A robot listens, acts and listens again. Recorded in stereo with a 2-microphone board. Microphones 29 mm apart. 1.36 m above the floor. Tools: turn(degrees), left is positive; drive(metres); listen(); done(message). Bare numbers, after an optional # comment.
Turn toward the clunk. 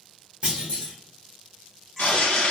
# The clunk: about 35° right or 145° right.
turn(-35)
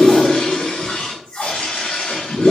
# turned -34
listen()
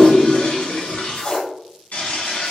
done("I heard a clunk, but can't make it out now. It was about 5° right or 110° right.")